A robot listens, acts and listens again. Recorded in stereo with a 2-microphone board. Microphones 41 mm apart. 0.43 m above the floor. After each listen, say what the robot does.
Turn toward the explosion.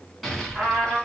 Turn 30° left.
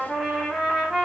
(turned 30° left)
Keep listening.
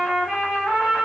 I heard an explosion, but can't make it out now. It was about 30° right or 150° left.